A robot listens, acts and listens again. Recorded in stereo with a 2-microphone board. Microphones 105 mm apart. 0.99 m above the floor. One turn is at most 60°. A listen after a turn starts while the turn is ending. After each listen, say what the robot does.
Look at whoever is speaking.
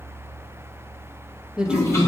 Turn 30° right.
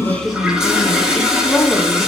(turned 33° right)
Turn 25° left.
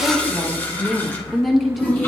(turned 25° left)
Facing the woman speaking, 1 to 2 m away.